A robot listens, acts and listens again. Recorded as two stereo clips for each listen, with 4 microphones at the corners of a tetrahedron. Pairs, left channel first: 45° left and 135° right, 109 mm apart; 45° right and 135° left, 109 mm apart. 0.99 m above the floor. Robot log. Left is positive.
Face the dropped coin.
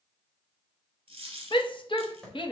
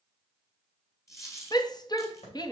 note: The dropped coin: 105° right.
cmd yaw -105
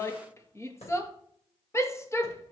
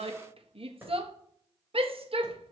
end: Facing where the dropped coin came from. I can't hear it now.